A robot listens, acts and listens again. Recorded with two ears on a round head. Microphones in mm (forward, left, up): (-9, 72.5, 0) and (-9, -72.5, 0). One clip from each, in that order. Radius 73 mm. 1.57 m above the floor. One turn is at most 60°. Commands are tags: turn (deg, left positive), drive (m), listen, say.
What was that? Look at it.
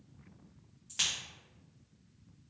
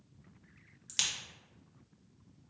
<turn deg="-60"/>
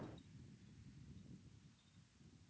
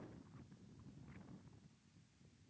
<turn deg="-30"/>
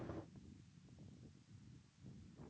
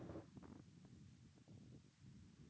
<say>I heard a crack from this way, but can't make it out now.</say>